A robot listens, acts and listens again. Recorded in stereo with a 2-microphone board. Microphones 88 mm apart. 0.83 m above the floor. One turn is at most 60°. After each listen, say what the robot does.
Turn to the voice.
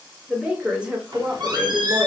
Turn 30° right.
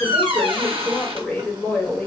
Turn 15° left.
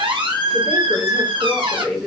Facing the woman speaking, 1 to 2 m away.